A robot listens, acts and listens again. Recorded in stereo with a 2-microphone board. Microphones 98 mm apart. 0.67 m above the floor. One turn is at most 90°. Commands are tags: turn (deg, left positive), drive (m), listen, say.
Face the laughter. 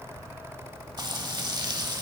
<listen/>
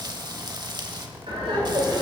<turn deg="-75"/>
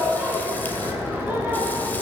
<turn deg="-15"/>
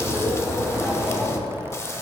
<say>Facing the laughter.</say>